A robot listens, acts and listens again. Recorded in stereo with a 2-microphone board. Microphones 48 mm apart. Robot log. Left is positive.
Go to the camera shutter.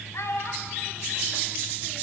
cmd idle
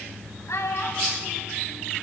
cmd idle
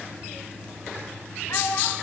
end: I can't make out a camera shutter, only a child speaking.